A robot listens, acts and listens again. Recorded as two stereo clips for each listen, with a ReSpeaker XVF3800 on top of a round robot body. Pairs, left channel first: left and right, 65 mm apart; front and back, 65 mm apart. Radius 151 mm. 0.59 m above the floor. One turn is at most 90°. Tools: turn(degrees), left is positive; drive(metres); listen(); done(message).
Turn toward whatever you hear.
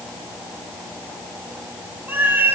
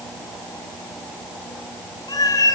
turn(degrees=-30)
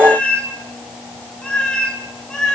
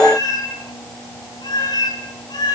turn(degrees=10)
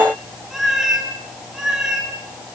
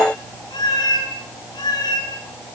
turn(degrees=-10)
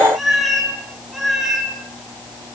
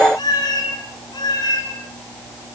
done("Facing the cat meowing.")